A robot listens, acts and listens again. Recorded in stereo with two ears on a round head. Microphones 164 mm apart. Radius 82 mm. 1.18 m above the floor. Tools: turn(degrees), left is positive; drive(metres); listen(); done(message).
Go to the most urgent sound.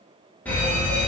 turn(degrees=30)
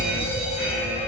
turn(degrees=140)
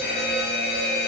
turn(degrees=55)
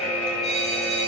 drive(metres=1.0)
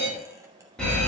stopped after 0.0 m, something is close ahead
done("Something is in my way. I am facing the fire alarm but have not reached it.")